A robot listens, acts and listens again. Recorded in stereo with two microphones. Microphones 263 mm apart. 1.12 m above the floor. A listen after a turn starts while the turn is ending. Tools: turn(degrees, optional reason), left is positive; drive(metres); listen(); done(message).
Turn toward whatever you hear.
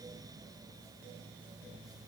listen()
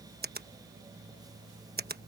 turn(degrees=-35, reason="The finger snap: about 35° right or 145° right.")
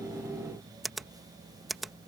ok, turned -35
done("Facing the finger snap.")